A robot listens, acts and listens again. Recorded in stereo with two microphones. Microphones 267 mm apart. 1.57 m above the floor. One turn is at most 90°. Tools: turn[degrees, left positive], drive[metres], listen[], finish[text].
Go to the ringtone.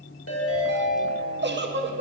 Thought: The ringtone: about 60° left or 120° left.
Action: turn[60]
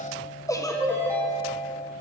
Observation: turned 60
Thought: So it is at 10° left.
Action: turn[10]
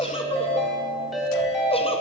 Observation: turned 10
Action: drive[1.0]
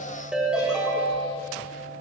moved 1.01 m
Action: drive[1.0]
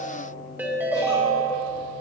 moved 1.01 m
Thought: The ringtone is now 10° right.
Action: turn[-10]
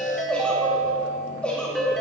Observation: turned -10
Action: drive[1.0]
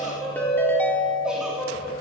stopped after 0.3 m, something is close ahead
Thought: The ringtone is now 10° left.
Action: turn[10]
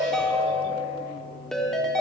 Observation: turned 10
Action: finish[Arrived at the ringtone, straight ahead.]